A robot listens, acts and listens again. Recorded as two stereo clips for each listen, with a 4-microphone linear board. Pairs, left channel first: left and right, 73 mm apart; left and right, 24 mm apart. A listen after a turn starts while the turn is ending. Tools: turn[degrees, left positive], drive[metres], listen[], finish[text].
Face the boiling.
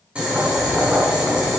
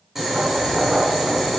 Action: turn[-30]
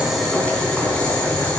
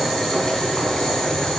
Thought: So it is at 15° left.
Action: turn[15]
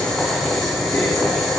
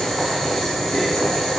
Action: finish[Found it: boiling, straight ahead.]